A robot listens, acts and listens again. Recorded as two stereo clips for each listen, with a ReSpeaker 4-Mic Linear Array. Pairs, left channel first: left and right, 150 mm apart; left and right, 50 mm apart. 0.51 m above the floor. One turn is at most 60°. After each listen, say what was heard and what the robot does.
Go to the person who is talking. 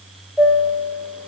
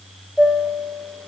Keep listening.
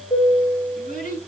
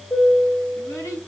The child speaking: about 70° left or 110° left. Turn 60° left.
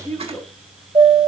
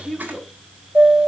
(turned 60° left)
So it is at 15° left. Turn 15° left.
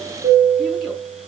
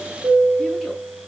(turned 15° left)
Keep listening.
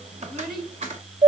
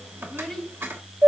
Drive 1.0 m forward.
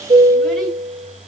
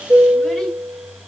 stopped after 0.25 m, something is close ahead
Keep listening.
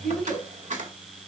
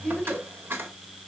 Blocked. The child speaking is further on, straight ahead.